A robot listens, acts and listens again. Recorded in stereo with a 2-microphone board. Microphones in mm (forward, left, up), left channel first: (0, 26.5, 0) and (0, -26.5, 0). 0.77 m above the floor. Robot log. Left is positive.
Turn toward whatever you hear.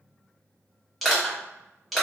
cmd yaw +30
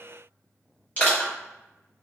note: So it is at 150° left.
cmd yaw +150
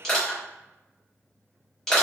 note: The crushing is now 10° left.
cmd yaw +10
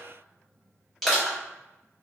end: Found it: crushing, straight ahead, 1 to 2 m away.